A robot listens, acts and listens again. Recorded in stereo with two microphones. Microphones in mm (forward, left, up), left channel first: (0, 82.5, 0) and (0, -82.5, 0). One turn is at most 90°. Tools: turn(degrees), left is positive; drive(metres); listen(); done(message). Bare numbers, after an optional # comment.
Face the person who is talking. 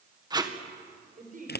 # The man speaking: about 60° right or 120° right.
turn(-60)
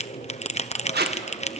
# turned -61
listen()
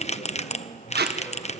listen()
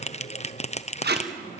done("I heard a man speaking, but can't make it out now. It was about 5° left or 60° right.")